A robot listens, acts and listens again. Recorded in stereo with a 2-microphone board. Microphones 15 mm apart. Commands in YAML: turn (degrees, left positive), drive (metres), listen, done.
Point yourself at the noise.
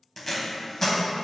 turn: 30
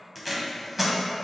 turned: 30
turn: -15
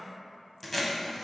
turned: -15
done: "Found it: tape being pulled, straight ahead."